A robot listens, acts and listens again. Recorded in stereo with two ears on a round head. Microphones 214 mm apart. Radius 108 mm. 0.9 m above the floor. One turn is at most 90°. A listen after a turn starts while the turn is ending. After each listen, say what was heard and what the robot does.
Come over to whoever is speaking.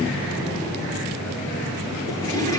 Keep listening.
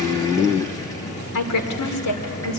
Turn 90° left.
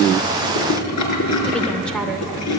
Keep listening.
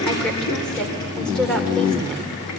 Drive 1.0 m forward.
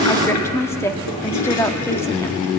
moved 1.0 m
The woman speaking is now 10° left. Turn 10° left.
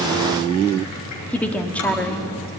Drive 1.0 m forward.
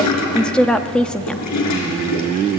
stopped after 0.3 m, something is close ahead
Arrived at the woman speaking, straight ahead.